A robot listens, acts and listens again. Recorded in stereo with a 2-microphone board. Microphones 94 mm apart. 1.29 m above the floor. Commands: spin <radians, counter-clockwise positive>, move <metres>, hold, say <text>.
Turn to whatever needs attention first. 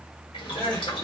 spin 0.35
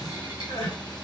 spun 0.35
spin 2.36
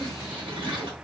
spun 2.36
hold
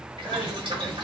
spin -0.44
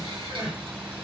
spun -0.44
spin -0.17
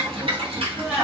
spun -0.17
say Facing the crying, 1 to 2 m away.